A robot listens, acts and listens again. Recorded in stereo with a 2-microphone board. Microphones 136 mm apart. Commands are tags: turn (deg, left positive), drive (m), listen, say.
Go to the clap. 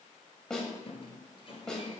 <listen/>
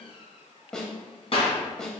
<turn deg="45"/>
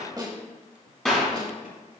<drive m="1.0"/>
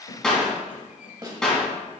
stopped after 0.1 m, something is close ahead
<say>Something is in my way. I am facing the clap but have not reached it.</say>